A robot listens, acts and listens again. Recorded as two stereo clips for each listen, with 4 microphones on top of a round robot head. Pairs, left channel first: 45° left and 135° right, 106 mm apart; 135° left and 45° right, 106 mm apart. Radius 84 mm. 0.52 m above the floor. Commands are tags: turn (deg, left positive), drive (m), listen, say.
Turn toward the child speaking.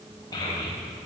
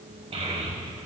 <turn deg="-15"/>
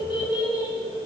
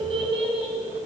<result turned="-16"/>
<say>Found it: a child speaking, straight ahead, 2 to 4 m away.</say>